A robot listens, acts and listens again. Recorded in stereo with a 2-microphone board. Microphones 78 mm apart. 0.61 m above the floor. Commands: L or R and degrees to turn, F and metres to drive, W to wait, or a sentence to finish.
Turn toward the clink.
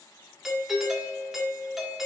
W
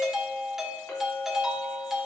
L25
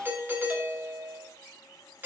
W
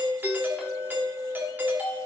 W
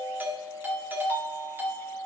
I heard a clink, but can't make it out now. It was about straight ahead or 130° left.